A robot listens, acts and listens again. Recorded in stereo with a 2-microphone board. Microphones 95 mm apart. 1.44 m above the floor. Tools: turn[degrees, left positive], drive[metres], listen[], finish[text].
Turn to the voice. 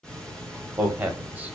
Thought: The man speaking: about 15° right or 165° right.
Action: turn[-15]
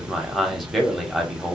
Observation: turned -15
Action: finish[Found it: a man speaking, straight ahead, 1 to 2 m away.]